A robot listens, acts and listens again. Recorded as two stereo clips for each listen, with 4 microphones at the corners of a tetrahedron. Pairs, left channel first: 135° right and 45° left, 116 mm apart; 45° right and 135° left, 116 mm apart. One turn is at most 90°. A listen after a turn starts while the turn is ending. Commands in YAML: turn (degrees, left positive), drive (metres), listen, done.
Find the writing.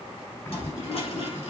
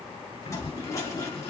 turn: -75
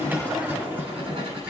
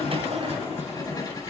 done: "Found it: writing, straight ahead, over 4 m away."